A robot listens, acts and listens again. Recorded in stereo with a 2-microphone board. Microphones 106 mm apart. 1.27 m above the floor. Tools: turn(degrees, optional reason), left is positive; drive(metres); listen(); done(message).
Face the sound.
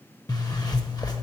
turn(degrees=40, reason="The zipper: about 40° left or 140° left.")
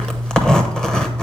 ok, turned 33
done("Facing the zipper, under 1 m away.")